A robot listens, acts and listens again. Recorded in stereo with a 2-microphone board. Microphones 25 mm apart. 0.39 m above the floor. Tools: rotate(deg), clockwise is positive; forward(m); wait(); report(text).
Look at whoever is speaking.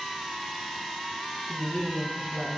rotate(25)
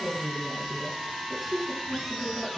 report("Found it: a woman speaking, straight ahead, over 4 m away.")